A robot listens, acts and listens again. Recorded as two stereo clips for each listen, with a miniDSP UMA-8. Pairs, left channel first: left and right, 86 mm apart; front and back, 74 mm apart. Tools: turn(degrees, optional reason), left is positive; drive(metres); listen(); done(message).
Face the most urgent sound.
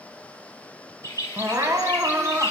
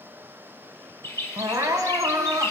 turn(degrees=-140, reason="The crying: 140° right.")
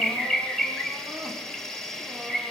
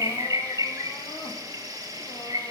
listen()
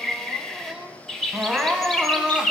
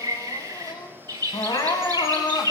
done("Found it: crying, straight ahead.")